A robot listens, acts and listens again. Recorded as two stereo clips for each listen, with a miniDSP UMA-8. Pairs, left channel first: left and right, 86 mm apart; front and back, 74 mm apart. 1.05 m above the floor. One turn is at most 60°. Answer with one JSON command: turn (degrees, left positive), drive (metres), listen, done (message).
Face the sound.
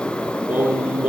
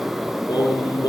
{"turn": -20}
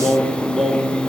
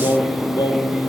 {"done": "Facing the singing."}